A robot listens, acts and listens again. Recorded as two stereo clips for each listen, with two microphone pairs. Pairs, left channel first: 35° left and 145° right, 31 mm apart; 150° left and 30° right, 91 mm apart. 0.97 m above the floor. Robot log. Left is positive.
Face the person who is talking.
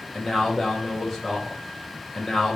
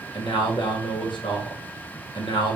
note: The man speaking: 125° left.
cmd yaw +125
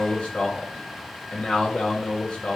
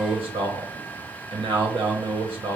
note: The man speaking is now 15° right.
cmd yaw -15
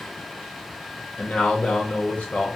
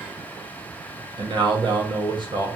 end: Facing the man speaking.